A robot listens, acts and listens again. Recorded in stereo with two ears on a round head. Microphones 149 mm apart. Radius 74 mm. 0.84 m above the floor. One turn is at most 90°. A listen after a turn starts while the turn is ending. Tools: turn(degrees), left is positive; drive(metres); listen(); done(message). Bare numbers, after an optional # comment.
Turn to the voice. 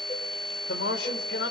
turn(90)
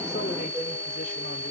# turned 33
# Nothing new. It was at 55° left.
turn(55)
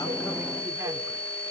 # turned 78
# Nothing new. It was at 20° right.
turn(-20)
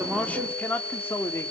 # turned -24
# The man speaking is now 15° left.
turn(15)
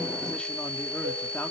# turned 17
listen()
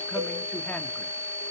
listen()
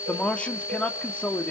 # The man speaking is now 10° left.
turn(10)
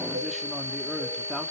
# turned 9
listen()
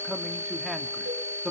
done("Facing the man speaking.")